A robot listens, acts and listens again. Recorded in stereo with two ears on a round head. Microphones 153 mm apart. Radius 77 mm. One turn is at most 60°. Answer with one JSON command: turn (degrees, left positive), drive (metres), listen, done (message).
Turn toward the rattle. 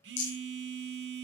{"turn": 60}
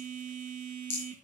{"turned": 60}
{"turn": 35}
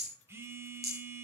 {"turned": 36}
{"done": "Facing the rattle."}